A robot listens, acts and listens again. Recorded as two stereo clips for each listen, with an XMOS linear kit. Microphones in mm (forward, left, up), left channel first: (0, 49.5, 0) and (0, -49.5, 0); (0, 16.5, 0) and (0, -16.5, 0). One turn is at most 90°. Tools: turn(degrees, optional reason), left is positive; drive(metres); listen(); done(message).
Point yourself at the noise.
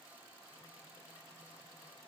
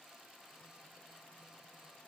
listen()
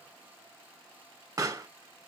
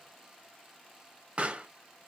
turn(degrees=-35, reason="The pop: about 35° right or 145° right.")
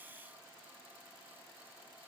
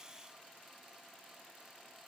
listen()
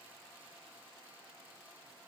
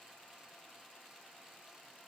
done("I heard a pop, but can't make it out now. It was about straight ahead or 110° right.")